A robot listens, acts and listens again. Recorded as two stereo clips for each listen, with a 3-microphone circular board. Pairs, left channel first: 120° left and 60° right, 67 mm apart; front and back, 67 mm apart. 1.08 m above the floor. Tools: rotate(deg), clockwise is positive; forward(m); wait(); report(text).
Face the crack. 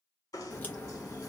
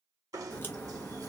rotate(-55)
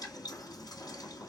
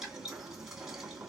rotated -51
report("Facing where the crack came from. I can't hear it now.")